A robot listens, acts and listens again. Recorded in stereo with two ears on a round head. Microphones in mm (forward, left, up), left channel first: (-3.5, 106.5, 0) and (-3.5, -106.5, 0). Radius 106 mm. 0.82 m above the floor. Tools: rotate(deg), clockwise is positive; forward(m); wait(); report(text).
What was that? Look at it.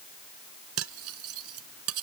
rotate(65)
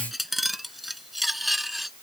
report("Facing the cutlery clinking.")